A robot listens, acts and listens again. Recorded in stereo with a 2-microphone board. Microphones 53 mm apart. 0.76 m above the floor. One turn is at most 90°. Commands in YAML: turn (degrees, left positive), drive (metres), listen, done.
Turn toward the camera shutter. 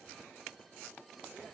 listen: true
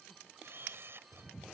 turn: -55
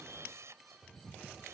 turn: -70
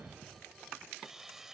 done: "Found it: a camera shutter, straight ahead."